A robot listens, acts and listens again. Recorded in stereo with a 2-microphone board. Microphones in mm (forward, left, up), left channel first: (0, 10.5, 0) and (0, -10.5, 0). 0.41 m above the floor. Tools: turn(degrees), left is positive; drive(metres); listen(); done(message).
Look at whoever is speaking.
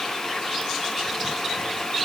listen()
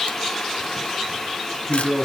turn(degrees=30)
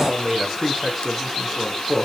done("Found it: a man speaking, straight ahead, 2 to 4 m away.")